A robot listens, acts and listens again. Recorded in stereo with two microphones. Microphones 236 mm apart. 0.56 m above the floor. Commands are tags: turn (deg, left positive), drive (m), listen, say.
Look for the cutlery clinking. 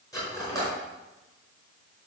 <turn deg="30"/>
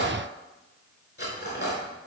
<turn deg="135"/>
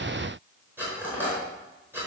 <turn deg="-10"/>
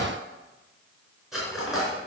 <say>Found it: cutlery clinking, straight ahead, over 4 m away.</say>